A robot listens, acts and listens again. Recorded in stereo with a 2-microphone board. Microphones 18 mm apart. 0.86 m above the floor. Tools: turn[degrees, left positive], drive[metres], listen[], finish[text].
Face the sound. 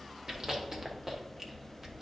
Thought: The chewing: about 25° right or 155° right.
Action: turn[-25]
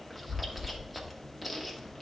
Action: finish[Found it: chewing, straight ahead.]